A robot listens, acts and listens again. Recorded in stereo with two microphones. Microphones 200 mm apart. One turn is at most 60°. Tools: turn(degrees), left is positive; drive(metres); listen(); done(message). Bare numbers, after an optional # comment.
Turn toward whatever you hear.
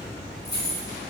# The keys jangling: about 60° left or 120° left.
turn(60)
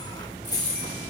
# So it is at 15° left.
turn(15)
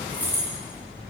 # The keys jangling is now 10° right.
turn(-10)
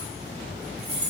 # The keys jangling is now 35° right.
turn(-35)
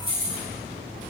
# The keys jangling is now 30° right.
turn(-30)
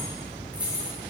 done("Found it: keys jangling, straight ahead.")